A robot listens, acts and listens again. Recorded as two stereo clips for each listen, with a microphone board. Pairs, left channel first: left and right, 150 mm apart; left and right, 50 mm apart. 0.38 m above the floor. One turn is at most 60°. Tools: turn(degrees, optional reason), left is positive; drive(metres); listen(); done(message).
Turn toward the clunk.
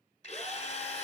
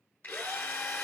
listen()
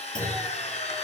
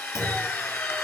turn(degrees=60, reason="The clunk: about 65° left or 115° left.")
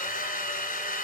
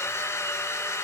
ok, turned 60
listen()
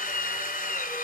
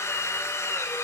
done("I heard a clunk, but can't make it out now. It was about 5° left or 55° left.")